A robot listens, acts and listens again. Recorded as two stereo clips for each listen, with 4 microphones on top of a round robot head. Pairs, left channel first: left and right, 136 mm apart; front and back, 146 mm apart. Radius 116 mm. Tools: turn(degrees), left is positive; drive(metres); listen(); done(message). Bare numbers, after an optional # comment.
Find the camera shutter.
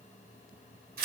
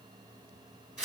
listen()
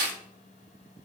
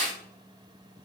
listen()
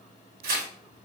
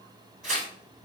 done("I can't make out a camera shutter, only tearing paper.")